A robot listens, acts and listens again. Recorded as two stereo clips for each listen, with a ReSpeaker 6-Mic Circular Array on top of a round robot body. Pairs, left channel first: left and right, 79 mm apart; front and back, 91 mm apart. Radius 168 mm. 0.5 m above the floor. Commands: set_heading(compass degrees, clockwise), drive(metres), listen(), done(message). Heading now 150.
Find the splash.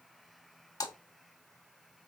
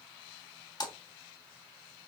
set_heading(105)
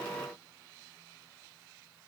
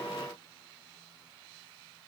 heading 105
done("Facing where the splash came from. I can't hear it now.")